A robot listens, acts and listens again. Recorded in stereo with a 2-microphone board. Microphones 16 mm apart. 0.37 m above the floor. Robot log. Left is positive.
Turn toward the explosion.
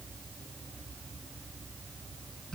cmd idle
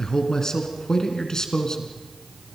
cmd idle
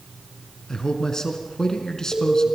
note: The explosion: about 35° left or 145° left.
cmd yaw +35
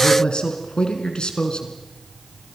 cmd idle
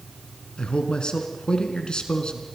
end: I heard an explosion, but can't make it out now. It was about straight ahead or 110° left.